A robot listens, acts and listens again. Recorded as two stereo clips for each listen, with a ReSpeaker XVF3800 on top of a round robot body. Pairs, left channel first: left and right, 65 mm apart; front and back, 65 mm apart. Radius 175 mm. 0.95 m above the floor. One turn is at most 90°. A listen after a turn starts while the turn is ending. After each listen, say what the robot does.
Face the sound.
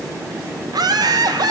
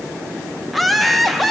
Turn 90° right.
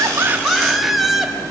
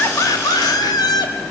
Facing the laughter, 2 to 4 m away.